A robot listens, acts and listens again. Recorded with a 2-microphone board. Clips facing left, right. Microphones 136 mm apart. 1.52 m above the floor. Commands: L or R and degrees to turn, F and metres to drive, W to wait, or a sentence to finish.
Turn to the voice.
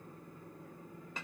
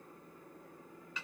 W
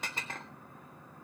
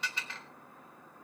W
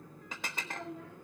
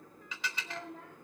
R60
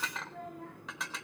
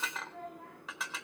Found it: a child speaking, straight ahead, over 4 m away.